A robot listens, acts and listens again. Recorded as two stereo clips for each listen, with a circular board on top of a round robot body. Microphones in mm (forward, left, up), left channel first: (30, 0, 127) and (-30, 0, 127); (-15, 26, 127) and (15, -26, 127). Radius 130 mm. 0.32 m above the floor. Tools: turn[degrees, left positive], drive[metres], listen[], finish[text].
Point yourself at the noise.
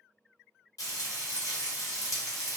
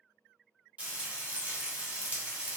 Action: finish[Facing the frying.]